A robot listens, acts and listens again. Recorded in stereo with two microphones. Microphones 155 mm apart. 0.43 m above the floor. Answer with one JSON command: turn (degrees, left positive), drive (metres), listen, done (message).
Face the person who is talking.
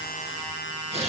{"listen": true}
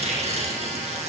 {"listen": true}
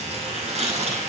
{"done": "I can't make out anyone speaking, only tearing paper."}